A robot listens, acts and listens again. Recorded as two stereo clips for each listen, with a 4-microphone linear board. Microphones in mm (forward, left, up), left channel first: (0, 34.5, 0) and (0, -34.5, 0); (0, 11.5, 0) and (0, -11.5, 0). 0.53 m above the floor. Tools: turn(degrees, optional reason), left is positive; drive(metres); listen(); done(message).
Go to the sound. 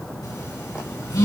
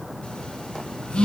turn(degrees=60, reason="The phone buzzing: about 60° left or 120° left.")
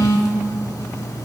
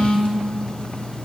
turn(degrees=55, reason="So it is at 55° left.")
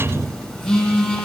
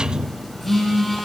drive(metres=1.0)
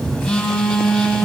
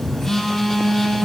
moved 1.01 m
drive(metres=1.0)
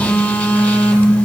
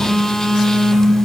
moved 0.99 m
turn(degrees=20, reason="The phone buzzing is now 20° left.")
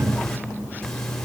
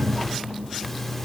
listen()
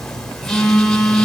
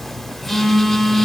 turn(degrees=10, reason="The phone buzzing is now 10° left.")
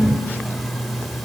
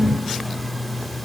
listen()
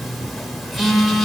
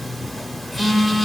drive(metres=1.0)
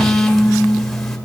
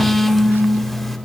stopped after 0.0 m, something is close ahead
done("I am next to the phone buzzing.")